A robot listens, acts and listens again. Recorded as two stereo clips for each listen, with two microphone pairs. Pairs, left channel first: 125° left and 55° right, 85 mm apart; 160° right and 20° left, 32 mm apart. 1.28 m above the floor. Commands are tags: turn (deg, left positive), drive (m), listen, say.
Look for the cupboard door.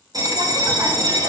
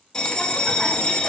<listen/>
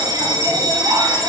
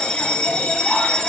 <listen/>
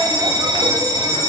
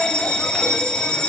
<say>I can't make out a cupboard door to turn to.</say>